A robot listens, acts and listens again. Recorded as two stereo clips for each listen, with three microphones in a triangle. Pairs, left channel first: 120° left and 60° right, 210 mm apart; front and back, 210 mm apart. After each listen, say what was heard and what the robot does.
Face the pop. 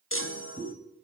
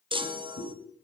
The pop: 25° left. Turn 25° left.
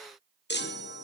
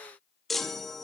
I heard a pop from this way, but can't make it out now.